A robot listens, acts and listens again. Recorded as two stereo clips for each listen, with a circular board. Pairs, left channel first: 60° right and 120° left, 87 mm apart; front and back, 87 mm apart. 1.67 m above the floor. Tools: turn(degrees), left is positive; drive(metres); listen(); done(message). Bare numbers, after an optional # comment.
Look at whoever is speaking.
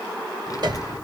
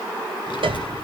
# The child speaking: 15° right.
turn(-15)
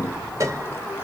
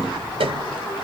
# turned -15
done("Facing the child speaking.")